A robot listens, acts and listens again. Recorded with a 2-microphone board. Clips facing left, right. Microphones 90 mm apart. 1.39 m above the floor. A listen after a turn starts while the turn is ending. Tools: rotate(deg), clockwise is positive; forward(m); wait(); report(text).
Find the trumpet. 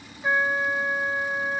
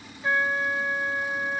rotate(-30)
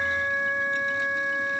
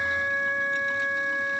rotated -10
rotate(-30)
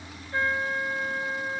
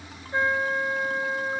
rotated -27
rotate(25)
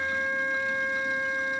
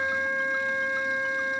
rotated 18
rotate(10)
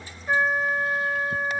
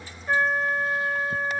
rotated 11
report("Found it: a trumpet, straight ahead.")